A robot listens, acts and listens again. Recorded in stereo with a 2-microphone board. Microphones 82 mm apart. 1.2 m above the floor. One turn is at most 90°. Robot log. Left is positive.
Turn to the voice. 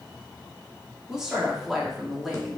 cmd yaw +30
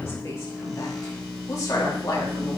note: So it is at 135° left.
cmd yaw +90
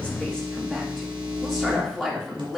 end: Facing the woman speaking, 2 to 4 m away.